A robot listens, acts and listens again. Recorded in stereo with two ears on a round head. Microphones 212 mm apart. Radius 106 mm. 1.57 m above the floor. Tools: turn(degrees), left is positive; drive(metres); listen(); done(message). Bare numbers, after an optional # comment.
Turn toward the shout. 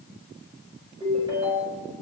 listen()
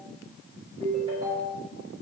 listen()
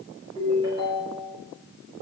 done("I can't make out a shout, only a ringtone.")